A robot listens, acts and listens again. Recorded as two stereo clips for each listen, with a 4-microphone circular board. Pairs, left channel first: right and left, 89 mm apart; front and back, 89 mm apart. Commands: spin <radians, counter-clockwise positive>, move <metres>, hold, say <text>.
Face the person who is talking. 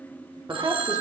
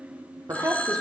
spin 2.27
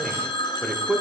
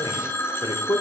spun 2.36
say Found it: a man speaking, straight ahead.